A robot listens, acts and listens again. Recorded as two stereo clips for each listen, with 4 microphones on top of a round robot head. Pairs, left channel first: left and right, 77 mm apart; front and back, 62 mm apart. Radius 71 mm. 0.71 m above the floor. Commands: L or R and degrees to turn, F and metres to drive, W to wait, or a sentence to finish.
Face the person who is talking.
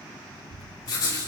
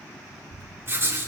R135
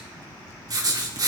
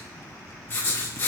W
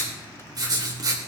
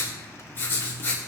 W
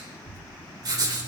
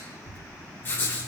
L35
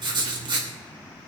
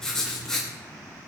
W
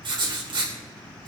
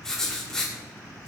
W
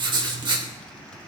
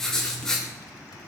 I heard a child speaking from this way, but can't make it out now.